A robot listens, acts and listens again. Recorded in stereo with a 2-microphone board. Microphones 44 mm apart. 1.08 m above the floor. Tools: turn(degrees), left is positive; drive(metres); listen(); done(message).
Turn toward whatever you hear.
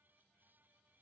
listen()
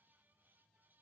listen()
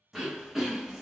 turn(degrees=-30)
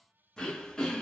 turn(degrees=15)
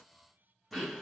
done("Found it: throat clearing, straight ahead, under 1 m away.")